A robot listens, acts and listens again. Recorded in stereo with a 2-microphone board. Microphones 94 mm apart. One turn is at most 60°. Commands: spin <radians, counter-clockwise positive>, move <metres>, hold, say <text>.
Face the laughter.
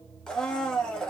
hold
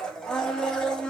hold
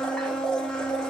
say I can't make out laughter to turn to.